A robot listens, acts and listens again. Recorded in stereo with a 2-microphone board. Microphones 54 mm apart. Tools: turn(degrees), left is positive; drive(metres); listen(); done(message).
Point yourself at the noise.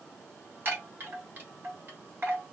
turn(degrees=-40)
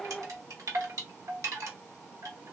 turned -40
turn(degrees=-100)
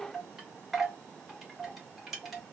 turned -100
done("Facing the chime, 1 to 2 m away.")